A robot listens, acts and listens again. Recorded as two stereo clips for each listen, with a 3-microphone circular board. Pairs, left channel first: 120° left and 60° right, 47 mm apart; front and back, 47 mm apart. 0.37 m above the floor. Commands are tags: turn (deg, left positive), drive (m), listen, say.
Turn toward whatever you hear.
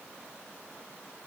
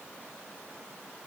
<listen/>
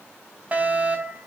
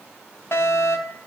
<say>Facing the fire alarm.</say>